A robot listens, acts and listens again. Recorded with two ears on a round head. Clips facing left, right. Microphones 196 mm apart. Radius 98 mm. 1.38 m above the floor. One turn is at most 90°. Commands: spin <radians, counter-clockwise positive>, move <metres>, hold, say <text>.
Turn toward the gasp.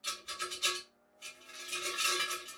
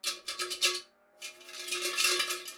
hold
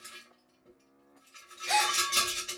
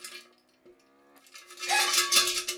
spin 0.52
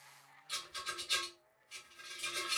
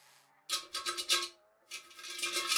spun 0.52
hold
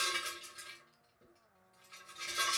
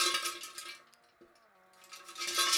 say I heard a gasp, but can't make it out now. It was about 15° right or 135° left.